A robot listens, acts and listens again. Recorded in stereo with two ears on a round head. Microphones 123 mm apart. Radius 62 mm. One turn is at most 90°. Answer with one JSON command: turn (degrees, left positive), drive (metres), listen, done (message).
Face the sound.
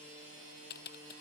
{"turn": 90}
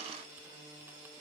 {"listen": true}
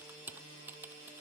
{"turn": -15}
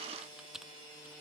{"done": "Found it: typing on a keyboard, straight ahead."}